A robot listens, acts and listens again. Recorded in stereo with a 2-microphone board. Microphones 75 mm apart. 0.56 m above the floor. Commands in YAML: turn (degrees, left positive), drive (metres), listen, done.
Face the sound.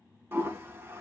turn: -35
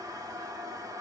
turn: -105
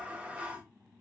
turn: -20
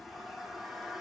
done: "Facing the toilet flushing."